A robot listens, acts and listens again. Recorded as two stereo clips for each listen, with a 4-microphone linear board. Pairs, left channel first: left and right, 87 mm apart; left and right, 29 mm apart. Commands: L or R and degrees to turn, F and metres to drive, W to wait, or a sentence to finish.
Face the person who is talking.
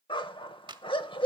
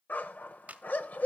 W
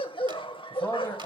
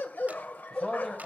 L25
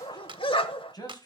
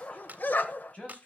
L130
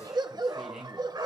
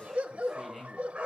Facing the man speaking.